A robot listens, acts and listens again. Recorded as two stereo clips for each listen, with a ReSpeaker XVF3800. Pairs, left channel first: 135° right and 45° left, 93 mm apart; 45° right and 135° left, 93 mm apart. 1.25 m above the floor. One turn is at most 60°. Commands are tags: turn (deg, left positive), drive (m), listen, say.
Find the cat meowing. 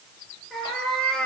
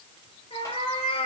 <turn deg="-55"/>
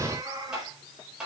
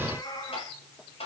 <say>Facing the cat meowing.</say>